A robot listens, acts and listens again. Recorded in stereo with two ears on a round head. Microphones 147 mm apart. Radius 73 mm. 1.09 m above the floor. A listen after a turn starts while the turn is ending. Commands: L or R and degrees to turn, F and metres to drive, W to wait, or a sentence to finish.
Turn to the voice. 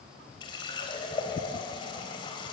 W
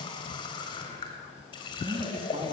R35
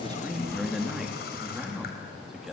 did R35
Facing the man speaking.